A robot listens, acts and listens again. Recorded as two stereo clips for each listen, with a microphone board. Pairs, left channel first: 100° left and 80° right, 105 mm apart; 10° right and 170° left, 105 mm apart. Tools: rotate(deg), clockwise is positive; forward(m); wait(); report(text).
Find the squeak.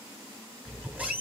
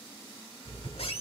report("Found it: a squeak, straight ahead, 1 to 2 m away.")